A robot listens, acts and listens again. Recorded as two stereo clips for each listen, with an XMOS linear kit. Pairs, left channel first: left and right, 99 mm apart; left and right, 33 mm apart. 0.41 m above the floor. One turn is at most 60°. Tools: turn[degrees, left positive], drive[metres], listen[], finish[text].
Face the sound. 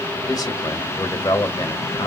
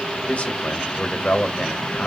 Thought: The man speaking: about 40° left or 140° left.
Action: turn[40]
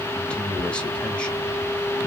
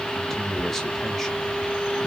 Thought: So it is at 10° left.
Action: turn[10]
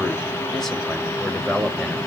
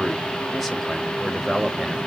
Action: finish[Facing the man speaking, 1 to 2 m away.]